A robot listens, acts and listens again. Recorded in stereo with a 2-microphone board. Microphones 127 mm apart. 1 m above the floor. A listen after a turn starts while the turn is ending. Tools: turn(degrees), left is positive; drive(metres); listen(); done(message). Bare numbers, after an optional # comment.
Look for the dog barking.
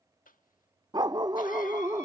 # The dog barking: about 30° right or 150° right.
turn(-30)
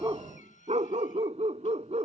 # So it is at 125° right.
turn(-125)
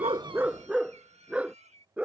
# The dog barking is now 10° right.
turn(-10)
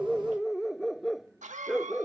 done("Facing the dog barking.")